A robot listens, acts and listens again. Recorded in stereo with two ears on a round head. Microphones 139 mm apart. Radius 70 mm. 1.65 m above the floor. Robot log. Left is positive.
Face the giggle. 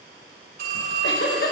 cmd yaw +90
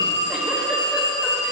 cmd idle
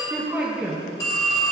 note: The giggle is now 10° right.
cmd yaw -10
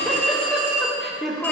end: Found it: a giggle, straight ahead.